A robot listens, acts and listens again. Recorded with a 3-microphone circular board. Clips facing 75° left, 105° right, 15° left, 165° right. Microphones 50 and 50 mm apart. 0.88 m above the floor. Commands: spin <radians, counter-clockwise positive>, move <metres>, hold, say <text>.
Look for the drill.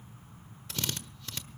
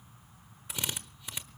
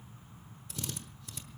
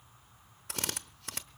spin 3.14
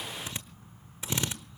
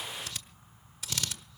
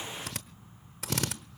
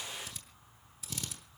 spin 0.17
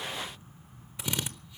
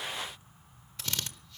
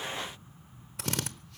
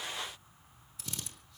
say Found it: a drill, straight ahead.